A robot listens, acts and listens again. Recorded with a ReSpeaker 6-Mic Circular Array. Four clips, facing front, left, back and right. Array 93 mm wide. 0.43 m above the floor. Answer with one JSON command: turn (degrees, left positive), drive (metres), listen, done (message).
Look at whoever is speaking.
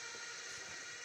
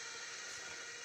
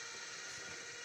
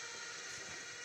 {"listen": true}
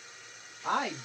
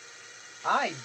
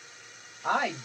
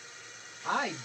{"turn": 125}
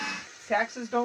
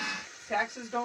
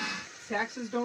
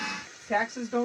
{"turn": -15}
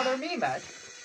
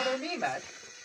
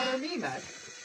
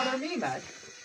{"done": "Found it: a woman speaking, straight ahead, 1 to 2 m away."}